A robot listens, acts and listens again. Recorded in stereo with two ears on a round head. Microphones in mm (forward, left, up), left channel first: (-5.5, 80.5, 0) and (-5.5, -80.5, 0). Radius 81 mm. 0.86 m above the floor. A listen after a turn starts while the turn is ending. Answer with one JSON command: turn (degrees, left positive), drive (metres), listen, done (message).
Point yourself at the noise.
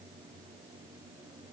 {"listen": true}
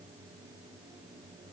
{"listen": true}
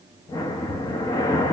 {"turn": 20}
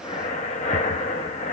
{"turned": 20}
{"turn": 140}
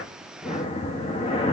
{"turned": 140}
{"turn": 30}
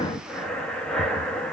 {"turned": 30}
{"done": "Found it: breathing, straight ahead."}